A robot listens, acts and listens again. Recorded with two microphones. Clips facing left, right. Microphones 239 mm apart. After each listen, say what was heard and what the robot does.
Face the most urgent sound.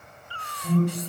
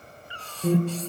Turn 90° right.
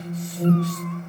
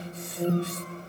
Found it: an alarm, straight ahead.